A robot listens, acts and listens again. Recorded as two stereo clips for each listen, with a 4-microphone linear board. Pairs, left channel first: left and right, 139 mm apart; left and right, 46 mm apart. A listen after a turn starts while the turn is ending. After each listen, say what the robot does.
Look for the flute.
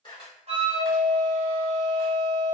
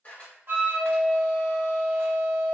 Turn 50° right.
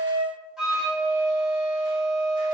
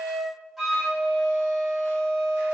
Facing the flute, under 1 m away.